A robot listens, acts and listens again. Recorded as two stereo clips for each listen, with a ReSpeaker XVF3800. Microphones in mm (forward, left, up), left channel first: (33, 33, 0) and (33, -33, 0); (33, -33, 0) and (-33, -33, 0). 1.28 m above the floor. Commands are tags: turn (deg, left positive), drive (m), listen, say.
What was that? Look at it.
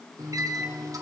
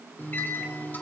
<turn deg="-60"/>
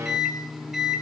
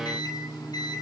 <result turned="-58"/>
<say>Facing the microwave.</say>